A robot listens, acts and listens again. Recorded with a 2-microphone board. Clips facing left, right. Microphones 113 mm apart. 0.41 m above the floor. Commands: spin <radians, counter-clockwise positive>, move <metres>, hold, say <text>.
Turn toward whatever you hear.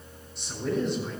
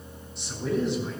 spin 0.52
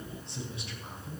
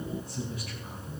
spin 2.71
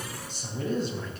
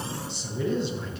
spin 0.79
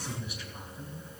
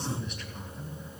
say Facing the man speaking, 2 to 4 m away.